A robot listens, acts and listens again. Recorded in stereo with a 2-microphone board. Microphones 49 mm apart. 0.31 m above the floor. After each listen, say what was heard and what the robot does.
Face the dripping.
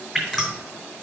Turn 30° left.
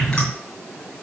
Keep listening.
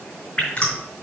So it is at 150° left. Turn 150° left.
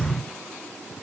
Keep listening.
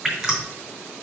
The dripping is now 15° right. Turn 15° right.
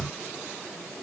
Keep listening.
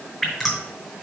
Found it: dripping, straight ahead, 2 to 4 m away.